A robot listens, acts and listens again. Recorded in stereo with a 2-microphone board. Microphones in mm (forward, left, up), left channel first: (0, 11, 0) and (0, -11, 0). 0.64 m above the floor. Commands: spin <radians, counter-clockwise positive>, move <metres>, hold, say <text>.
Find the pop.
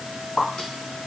spin 1.57
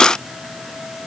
say I heard a pop from this way, but can't make it out now.